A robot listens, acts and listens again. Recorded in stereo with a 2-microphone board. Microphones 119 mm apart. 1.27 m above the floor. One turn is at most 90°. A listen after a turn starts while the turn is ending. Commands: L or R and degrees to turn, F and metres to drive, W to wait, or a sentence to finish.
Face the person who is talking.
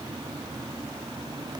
W
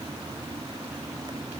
W
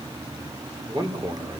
R35
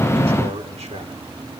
R90
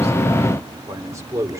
R25
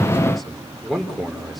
Found it: a man speaking, straight ahead, over 4 m away.